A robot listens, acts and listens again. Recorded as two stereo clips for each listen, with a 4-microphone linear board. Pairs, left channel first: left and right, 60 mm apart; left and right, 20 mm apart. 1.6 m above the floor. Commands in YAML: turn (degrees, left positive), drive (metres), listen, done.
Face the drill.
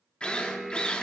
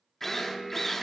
turn: 15
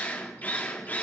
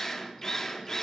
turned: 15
turn: 150
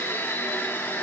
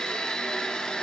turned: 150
turn: 45
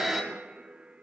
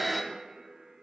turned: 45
done: "Found it: a drill, straight ahead."